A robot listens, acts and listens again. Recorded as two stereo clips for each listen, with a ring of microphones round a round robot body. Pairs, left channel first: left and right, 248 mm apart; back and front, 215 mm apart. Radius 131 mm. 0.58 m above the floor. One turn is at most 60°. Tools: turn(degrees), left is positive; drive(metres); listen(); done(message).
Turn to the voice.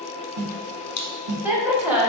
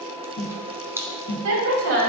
done("Found it: a woman speaking, straight ahead.")